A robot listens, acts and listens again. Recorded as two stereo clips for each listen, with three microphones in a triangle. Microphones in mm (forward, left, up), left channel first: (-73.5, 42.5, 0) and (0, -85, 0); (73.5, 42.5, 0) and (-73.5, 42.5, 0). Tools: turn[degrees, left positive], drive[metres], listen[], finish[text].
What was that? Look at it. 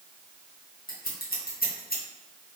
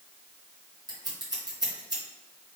Thought: The scissors: 115° left.
Action: turn[115]
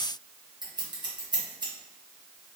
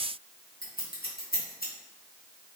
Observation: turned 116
Action: finish[Found it: scissors, straight ahead.]